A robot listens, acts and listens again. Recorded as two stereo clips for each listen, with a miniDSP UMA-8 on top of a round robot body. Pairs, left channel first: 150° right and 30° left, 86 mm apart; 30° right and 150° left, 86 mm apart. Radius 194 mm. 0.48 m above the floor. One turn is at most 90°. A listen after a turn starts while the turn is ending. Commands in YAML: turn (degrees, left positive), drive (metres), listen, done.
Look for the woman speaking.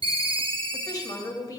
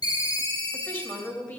turn: -90
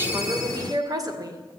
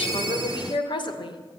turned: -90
turn: -15
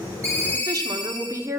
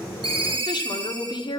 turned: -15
turn: -25
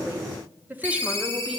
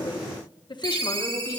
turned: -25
turn: -35
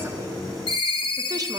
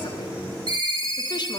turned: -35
listen: true
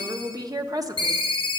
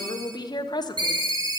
done: "Found it: a woman speaking, straight ahead, 1 to 2 m away."